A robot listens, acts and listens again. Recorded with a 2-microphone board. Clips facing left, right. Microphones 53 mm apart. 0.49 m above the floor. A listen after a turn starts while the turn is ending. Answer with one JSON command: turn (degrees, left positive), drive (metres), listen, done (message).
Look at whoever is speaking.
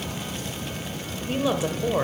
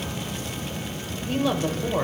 {"turn": 30}
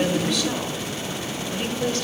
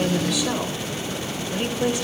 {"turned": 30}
{"turn": -15}
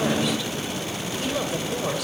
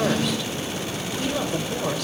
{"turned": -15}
{"done": "Facing the woman speaking."}